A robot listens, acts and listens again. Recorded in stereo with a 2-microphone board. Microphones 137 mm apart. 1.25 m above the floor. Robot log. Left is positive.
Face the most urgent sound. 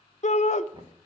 note: The shout: about 55° left or 125° left.
cmd yaw +55
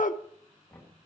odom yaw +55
note: So it is at 70° left.
cmd yaw +70
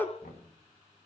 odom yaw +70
note: The shout is now 15° left.
cmd yaw +15
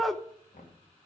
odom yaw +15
end: Found it: a shout, straight ahead.